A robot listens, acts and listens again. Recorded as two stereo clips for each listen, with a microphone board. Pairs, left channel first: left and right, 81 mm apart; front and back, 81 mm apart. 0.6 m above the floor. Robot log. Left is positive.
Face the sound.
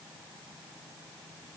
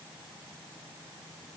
cmd idle
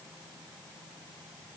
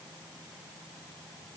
cmd idle
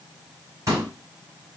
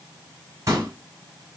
note: The pop: 135° right.
cmd yaw -135
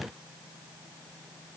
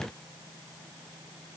end: Facing where the pop came from. I can't hear it now.